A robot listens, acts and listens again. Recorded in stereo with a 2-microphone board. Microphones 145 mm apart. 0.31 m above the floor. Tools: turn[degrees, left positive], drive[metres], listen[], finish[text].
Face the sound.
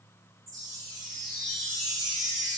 Thought: The chime: about 25° right or 155° right.
Action: turn[-25]
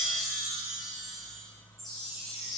Action: finish[Found it: a chime, straight ahead, 1 to 2 m away.]